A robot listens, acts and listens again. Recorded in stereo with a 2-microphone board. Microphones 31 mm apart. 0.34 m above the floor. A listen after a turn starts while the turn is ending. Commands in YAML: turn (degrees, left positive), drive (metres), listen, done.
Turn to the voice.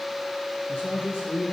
turn: 90
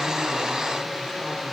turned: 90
listen: true
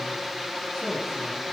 listen: true
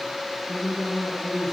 done: "Found it: a man speaking, straight ahead."